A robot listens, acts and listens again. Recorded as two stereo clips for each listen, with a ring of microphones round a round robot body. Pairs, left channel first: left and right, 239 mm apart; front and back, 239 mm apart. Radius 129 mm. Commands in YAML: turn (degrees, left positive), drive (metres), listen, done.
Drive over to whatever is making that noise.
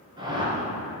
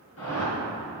turn: -20
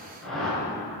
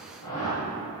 drive: 1.0
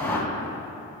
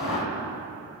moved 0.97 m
turn: 10
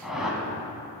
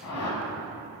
drive: 1.0
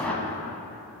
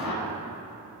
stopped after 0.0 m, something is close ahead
done: "I am next to the whoosh."